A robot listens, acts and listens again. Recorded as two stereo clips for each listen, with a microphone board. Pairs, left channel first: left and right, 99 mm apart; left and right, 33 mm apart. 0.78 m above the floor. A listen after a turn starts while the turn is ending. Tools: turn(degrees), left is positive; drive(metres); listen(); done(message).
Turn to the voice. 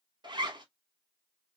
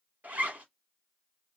listen()
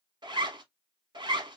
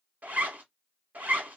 listen()
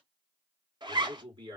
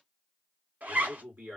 turn(degrees=-50)
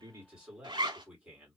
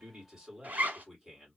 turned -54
turn(degrees=-15)
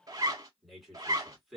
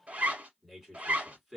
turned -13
done("Found it: a man speaking, straight ahead, 1 to 2 m away.")